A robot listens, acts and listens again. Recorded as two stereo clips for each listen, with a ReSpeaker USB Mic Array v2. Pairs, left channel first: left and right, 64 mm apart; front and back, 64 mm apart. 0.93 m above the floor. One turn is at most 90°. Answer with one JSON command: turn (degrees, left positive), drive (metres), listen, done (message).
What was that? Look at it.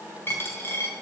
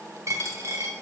{"turn": 90}
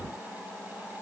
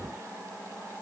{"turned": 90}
{"turn": 55}
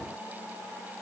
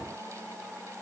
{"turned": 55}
{"done": "Facing where the dropped coin came from. I can't hear it now."}